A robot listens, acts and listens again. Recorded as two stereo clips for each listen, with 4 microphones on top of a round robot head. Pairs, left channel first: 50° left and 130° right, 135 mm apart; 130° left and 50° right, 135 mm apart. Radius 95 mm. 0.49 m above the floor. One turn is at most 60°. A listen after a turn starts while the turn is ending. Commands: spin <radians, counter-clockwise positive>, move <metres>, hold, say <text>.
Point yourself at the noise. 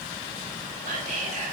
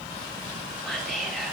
spin -1.05
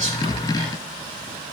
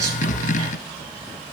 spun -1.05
spin -1.05
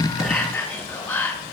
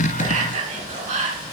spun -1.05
spin -0.52
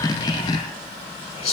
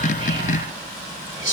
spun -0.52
say Facing the whispering, 2 to 4 m away.